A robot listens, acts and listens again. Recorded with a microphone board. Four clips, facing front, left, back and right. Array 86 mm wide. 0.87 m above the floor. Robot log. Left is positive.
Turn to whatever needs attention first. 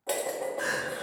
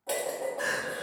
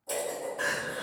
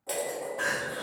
note: The crying: 120° right.
cmd yaw -120
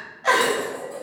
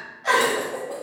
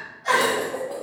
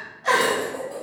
end: Found it: crying, straight ahead.